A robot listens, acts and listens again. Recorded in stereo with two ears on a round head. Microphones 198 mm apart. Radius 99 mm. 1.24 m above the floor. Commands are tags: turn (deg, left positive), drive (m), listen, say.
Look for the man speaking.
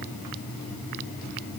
<listen/>
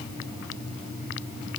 <listen/>
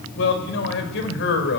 <turn deg="55"/>
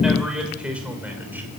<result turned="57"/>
<say>Facing the man speaking.</say>